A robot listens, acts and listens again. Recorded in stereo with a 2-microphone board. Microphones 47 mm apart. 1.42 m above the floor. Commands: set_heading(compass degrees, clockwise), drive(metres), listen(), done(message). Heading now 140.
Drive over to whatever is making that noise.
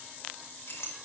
set_heading(80)
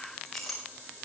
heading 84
drive(1.0)
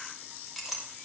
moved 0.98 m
drive(1.0)
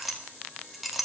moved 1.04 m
drive(1.0)
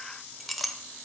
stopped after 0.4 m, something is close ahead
done("Arrived at the clink, straight ahead.")